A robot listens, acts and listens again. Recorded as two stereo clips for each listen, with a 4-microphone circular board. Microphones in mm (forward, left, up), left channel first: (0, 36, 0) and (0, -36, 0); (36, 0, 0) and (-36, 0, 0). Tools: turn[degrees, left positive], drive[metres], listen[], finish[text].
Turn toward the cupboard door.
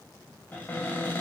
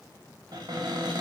Thought: The cupboard door: 155° left.
Action: turn[155]
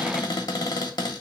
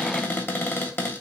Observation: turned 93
Thought: The cupboard door is now 60° left.
Action: turn[60]
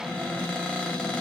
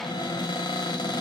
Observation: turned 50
Thought: The cupboard door is now 10° left.
Action: turn[10]
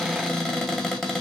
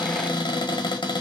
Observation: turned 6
Action: finish[Found it: a cupboard door, straight ahead.]